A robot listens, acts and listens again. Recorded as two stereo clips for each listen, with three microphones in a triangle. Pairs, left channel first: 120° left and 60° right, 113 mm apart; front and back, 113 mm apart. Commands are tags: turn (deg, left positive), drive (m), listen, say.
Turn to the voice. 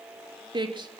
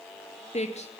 <turn deg="-15"/>
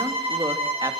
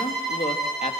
<say>Found it: a man speaking, straight ahead.</say>